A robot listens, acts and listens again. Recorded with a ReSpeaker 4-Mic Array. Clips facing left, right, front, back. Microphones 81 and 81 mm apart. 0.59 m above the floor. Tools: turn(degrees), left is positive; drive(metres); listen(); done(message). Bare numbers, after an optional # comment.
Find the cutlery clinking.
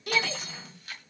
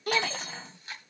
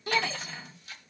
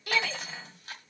# The cutlery clinking: 105° right.
turn(-105)
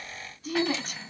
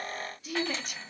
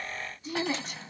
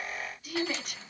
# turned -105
done("Facing the cutlery clinking.")